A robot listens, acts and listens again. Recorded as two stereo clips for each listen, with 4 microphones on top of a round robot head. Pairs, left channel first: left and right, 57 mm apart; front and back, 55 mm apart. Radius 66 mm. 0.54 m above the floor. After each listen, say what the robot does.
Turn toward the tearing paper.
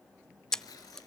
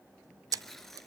Turn 85° left.
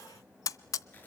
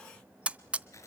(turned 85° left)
Turn 25° left.
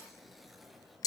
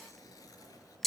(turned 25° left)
Found it: tearing paper, straight ahead.